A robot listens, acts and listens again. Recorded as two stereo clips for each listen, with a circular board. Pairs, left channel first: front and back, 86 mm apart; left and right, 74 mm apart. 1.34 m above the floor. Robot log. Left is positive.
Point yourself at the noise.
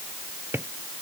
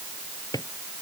note: The drawer: 115° left.
cmd yaw +115
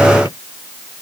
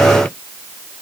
cmd idle
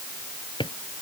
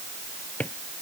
note: The drawer is now 20° left.
cmd yaw +20
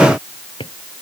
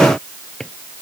end: Facing the drawer.